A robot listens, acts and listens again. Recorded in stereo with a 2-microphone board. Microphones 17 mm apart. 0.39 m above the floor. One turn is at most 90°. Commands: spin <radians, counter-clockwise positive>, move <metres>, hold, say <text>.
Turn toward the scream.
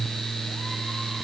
hold
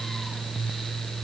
hold
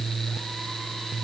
say I can't make out a scream to turn to.